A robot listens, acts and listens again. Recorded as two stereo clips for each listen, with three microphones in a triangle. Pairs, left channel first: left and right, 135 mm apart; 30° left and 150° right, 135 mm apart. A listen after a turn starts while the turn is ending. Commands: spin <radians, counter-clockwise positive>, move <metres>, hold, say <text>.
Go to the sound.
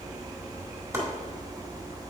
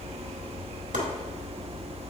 spin -2.79
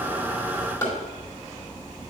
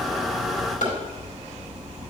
spin 0.35
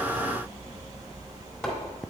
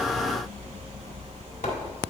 hold
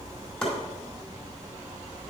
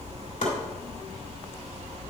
move 1.0
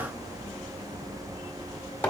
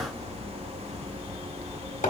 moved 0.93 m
spin 0.26
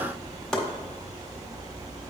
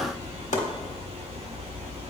move 1.0
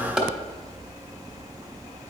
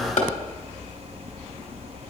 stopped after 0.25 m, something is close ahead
say I am next to the chopping.